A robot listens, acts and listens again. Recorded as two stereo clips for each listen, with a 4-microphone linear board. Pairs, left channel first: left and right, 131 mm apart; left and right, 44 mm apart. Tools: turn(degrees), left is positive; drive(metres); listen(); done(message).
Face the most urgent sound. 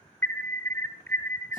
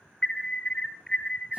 turn(degrees=15)
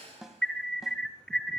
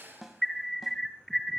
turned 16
done("Facing the alarm, 1 to 2 m away.")